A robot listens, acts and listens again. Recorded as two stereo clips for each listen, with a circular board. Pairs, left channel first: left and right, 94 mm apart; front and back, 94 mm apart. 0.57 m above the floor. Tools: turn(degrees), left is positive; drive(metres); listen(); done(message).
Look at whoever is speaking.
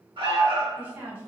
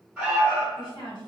turn(degrees=-25)
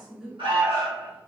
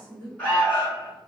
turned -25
done("Found it: a woman speaking, straight ahead.")